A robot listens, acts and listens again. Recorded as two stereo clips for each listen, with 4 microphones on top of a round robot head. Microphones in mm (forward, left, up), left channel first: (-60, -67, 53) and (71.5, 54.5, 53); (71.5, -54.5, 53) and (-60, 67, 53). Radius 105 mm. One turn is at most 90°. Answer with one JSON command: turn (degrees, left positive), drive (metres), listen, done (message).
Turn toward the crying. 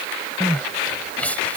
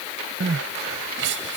{"turn": 90}
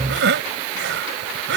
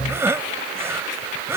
{"turn": 60}
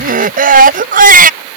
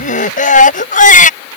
{"done": "Facing the crying."}